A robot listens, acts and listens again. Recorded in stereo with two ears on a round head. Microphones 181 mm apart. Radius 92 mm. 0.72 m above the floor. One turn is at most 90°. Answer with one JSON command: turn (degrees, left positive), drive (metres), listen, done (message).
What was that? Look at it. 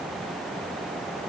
{"listen": true}
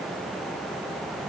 {"listen": true}
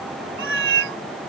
{"turn": -70}
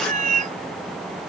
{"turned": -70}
{"turn": -40}
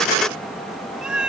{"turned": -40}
{"done": "Found it: a cat meowing, straight ahead."}